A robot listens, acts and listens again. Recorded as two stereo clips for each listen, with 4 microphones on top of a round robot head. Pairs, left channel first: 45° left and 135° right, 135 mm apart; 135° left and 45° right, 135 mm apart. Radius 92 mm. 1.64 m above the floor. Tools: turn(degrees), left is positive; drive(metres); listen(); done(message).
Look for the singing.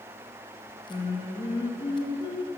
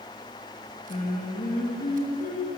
turn(degrees=100)
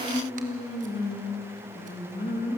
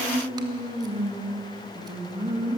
turn(degrees=10)
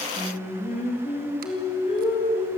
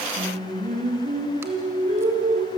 done("Facing the singing.")